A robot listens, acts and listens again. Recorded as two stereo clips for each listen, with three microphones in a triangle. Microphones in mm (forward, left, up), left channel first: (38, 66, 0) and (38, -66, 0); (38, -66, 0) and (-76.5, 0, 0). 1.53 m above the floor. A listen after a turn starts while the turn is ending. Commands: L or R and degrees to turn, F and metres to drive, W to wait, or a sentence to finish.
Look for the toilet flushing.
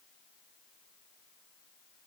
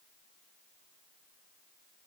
W
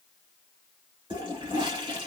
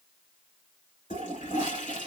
R45
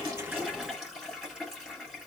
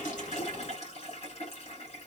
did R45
Facing the toilet flushing, 2 to 4 m away.